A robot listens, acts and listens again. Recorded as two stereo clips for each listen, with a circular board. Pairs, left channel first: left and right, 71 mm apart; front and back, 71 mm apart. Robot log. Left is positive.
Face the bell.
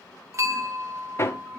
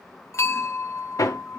note: The bell: 45° right.
cmd yaw -45
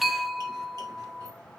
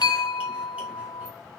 end: Facing the bell.